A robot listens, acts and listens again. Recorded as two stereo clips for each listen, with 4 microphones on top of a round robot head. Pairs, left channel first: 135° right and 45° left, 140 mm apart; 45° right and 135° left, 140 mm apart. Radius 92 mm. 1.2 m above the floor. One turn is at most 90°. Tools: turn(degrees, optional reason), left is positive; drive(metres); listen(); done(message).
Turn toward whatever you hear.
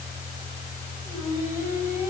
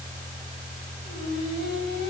turn(degrees=-30, reason="The singing: 30° right.")
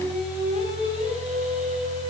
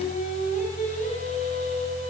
done("Facing the singing.")